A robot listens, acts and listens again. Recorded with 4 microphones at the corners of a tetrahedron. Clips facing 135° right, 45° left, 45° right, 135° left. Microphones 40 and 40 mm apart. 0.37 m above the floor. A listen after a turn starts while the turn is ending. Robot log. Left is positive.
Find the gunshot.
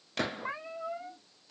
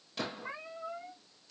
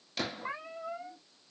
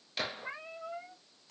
note: The gunshot: 145° right.
cmd yaw -145
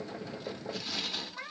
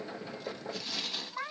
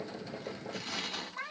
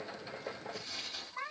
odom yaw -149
end: Facing where the gunshot came from. I can't hear it now.